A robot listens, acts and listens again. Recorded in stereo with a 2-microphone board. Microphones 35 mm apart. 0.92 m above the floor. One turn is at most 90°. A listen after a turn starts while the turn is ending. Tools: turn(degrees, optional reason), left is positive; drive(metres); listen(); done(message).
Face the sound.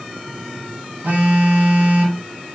turn(degrees=-55, reason="The phone buzzing: about 55° right or 125° right.")
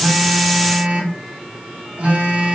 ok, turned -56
turn(degrees=-55, reason="So it is at 55° right.")
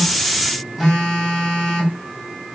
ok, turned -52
done("Found it: a phone buzzing, straight ahead.")